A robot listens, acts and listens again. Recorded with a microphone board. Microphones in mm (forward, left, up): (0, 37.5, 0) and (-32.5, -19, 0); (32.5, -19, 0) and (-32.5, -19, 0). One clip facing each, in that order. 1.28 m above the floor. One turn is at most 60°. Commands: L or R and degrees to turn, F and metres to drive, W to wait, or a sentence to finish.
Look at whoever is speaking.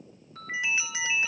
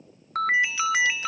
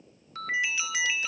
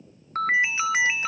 W
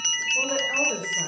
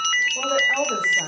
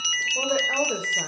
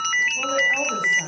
R40
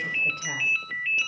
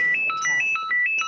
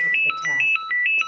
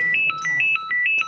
W
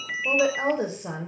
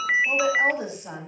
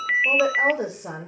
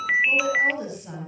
Facing the woman speaking, over 4 m away.